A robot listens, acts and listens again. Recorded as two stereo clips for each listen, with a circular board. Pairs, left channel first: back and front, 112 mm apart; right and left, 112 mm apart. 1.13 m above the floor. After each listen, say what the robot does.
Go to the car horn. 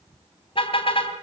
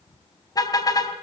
Turn 145° right.
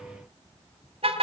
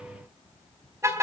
Turn 25° left.
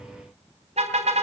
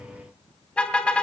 Turn 10° right.
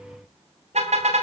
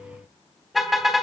Drive 1.0 m forward.
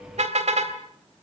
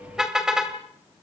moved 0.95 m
Drive 1.0 m forward.
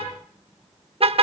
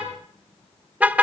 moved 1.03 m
Turn 15° left.
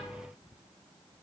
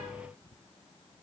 Keep listening.
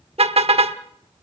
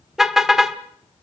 Drive 1.0 m forward.
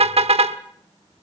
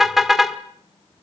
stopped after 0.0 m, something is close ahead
I am next to the car horn.